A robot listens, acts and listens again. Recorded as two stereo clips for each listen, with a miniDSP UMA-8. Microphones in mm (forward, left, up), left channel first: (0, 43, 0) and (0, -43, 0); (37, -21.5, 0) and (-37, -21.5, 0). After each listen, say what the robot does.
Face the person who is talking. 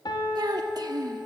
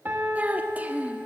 Turn 115° right.
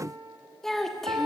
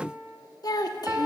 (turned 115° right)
Found it: a child speaking, straight ahead.